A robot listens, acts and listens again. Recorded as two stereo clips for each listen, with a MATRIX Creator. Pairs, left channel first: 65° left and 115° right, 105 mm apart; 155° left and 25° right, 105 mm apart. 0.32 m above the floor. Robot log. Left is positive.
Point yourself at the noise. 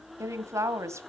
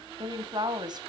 note: The woman speaking: 55° right.
cmd yaw -55
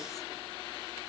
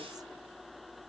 cmd idle
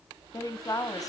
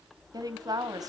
note: The woman speaking is now 20° left.
cmd yaw +20
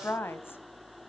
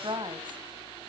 end: Facing the woman speaking, 1 to 2 m away.